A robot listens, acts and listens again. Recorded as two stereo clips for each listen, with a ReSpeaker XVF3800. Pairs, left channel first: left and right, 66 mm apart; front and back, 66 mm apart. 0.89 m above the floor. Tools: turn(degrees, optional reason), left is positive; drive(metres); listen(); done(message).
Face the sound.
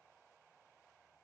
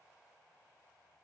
listen()
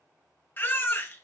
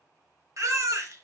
turn(degrees=145, reason="The baby crying: 145° left.")
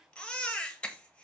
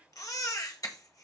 turn(degrees=20, reason="The baby crying is now 20° left.")
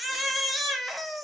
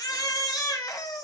done("Facing the baby crying.")